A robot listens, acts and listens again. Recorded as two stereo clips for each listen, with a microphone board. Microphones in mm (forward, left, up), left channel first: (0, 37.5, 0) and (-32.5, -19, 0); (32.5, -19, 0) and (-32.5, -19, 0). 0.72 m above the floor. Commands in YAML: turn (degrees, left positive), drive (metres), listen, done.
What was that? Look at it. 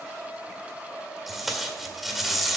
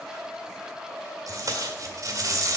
turn: 150
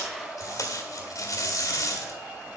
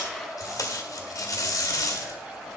turn: 30
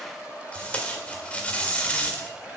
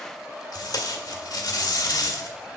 turn: -10
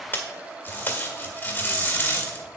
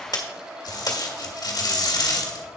done: "Found it: tape being pulled, straight ahead."